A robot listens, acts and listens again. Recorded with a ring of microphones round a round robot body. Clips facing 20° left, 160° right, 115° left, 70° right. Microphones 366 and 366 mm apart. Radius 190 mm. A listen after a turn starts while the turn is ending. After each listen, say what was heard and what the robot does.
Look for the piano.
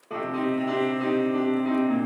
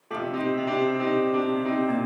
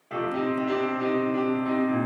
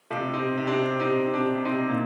The piano: 80° right. Turn 80° right.
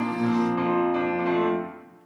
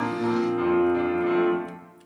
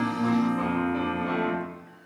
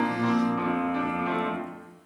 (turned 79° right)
Found it: a piano, straight ahead.